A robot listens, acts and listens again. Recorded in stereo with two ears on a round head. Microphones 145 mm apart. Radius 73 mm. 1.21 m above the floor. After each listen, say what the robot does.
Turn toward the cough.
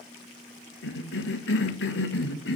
Turn 75° left.
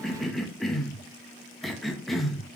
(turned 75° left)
Found it: a cough, straight ahead.